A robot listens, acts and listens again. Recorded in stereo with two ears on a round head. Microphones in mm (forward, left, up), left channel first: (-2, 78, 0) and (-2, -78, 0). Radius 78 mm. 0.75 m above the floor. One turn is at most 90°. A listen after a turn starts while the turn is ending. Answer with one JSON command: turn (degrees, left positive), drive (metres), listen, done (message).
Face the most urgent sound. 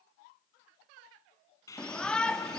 {"turn": 30}
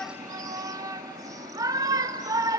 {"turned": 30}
{"turn": -20}
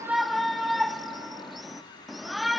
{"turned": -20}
{"done": "Found it: a shout, straight ahead."}